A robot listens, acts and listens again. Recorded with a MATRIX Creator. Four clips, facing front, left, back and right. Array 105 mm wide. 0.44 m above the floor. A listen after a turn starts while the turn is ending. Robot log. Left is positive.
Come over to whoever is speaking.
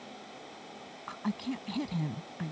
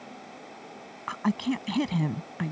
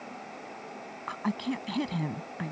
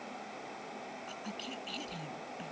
note: The woman speaking: 115° left.
cmd yaw +115
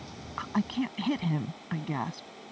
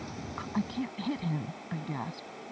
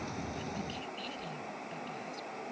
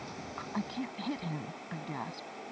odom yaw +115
cmd fwd 1.0
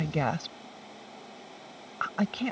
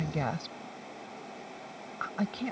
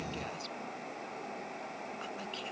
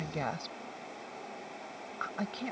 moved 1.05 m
cmd fwd 1.0
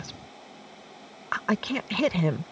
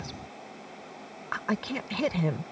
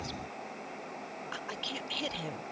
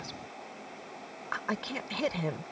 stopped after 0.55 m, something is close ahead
end: I am next to the woman speaking.